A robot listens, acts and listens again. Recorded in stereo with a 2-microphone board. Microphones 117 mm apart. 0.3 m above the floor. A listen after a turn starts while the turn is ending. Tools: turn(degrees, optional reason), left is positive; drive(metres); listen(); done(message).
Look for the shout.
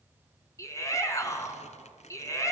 turn(degrees=25, reason="The shout: about 25° left or 155° left.")
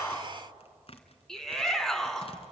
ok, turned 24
done("Facing the shout.")